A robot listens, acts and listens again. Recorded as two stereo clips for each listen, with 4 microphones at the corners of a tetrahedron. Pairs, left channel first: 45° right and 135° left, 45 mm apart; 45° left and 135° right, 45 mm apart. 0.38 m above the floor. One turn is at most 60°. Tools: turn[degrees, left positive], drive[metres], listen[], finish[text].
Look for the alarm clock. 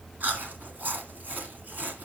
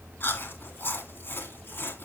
Action: listen[]
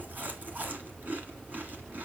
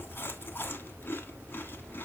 Action: listen[]
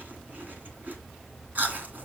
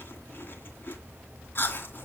Action: finish[I can't make out an alarm clock, only chewing.]